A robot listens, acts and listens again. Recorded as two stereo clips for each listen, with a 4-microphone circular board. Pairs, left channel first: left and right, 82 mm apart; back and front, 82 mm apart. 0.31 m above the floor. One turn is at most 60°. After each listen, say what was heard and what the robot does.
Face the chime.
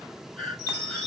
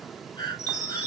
The chime: 40° right. Turn 40° right.
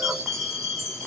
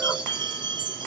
Found it: a chime, straight ahead.